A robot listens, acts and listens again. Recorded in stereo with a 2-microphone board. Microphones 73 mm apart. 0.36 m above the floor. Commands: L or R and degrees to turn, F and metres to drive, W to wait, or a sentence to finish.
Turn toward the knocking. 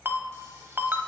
W
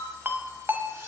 W
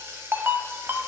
I can't make out knocking to turn to.